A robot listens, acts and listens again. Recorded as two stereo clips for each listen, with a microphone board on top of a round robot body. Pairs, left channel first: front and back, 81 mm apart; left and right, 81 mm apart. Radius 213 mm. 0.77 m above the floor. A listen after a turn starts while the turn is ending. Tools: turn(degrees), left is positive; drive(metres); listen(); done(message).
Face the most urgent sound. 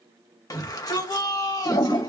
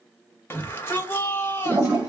turn(degrees=30)
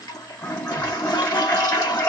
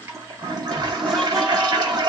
listen()
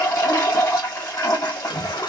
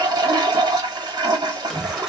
done("Facing the shout.")